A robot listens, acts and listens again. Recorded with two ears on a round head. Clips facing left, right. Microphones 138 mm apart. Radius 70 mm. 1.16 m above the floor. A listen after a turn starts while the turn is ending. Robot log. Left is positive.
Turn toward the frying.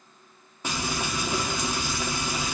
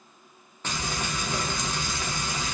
cmd yaw +30
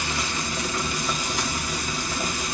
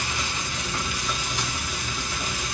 note: So it is at 140° left.
cmd yaw +140
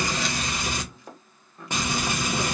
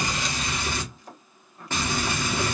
note: The frying is now 15° left.
cmd yaw +15
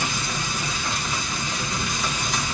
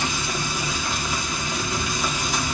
end: Facing the frying, 1 to 2 m away.